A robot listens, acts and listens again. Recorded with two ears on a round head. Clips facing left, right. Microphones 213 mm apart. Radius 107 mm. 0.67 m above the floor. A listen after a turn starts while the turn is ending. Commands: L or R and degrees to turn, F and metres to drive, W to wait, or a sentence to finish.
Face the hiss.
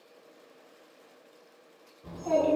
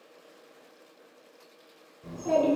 W
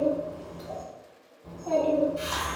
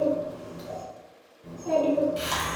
R90
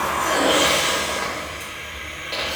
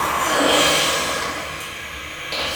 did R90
R15
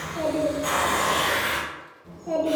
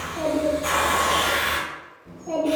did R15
Facing the hiss.